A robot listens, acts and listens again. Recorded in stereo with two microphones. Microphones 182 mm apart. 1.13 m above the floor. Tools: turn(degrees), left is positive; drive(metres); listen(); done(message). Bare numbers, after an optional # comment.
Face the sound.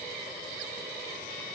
listen()
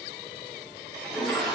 turn(30)
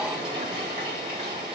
# So it is at 25° right.
turn(-25)
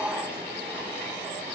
# The toilet flushing is now 10° right.
turn(-10)
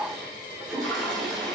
done("Found it: a toilet flushing, straight ahead, 2 to 4 m away.")